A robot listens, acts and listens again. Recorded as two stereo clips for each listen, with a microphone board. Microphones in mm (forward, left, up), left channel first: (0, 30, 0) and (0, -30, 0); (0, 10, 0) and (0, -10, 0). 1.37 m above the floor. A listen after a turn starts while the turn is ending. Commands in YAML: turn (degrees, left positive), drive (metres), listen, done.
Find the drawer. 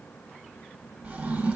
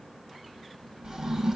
turn: -30
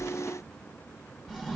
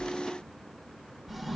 turn: -10
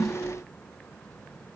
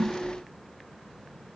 done: "Found it: a drawer, straight ahead, 2 to 4 m away."